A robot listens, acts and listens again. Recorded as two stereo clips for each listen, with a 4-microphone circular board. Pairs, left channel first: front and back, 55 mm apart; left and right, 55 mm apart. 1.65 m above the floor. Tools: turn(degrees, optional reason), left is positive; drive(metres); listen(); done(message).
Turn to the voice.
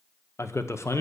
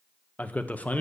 turn(degrees=30, reason="The man speaking: 30° left.")
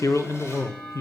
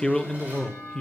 turn(degrees=10, reason="The man speaking is now 10° left.")
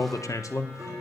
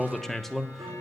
done("Found it: a man speaking, straight ahead, 1 to 2 m away.")